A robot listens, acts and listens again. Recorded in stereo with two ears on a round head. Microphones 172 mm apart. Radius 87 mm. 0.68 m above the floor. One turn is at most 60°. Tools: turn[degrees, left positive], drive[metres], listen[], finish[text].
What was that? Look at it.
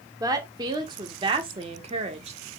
Thought: The woman speaking: about 35° right or 145° right.
Action: turn[-35]
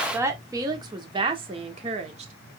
Thought: The woman speaking: about 35° right or 145° right.
Action: turn[-35]
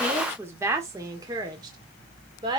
Thought: The woman speaking: about 20° right or 160° right.
Action: turn[-20]
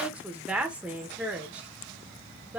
Action: finish[Facing the woman speaking, 1 to 2 m away.]